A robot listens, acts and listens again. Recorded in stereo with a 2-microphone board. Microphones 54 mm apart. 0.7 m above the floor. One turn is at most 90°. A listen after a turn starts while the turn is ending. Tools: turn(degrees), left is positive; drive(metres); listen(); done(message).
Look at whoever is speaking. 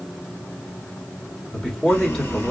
turn(degrees=30)
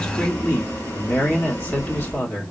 turn(degrees=90)
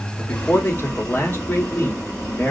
turn(degrees=45)
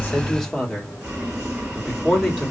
turn(degrees=10)
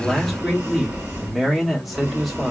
done("Facing the man speaking.")